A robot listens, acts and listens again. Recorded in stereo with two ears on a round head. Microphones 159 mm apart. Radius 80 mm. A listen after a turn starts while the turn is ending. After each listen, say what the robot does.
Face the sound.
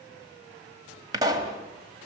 Turn 20° right.
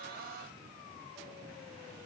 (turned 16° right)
Keep listening.
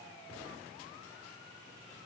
I heard a pop, but can't make it out now. It was about 5° right or 145° right.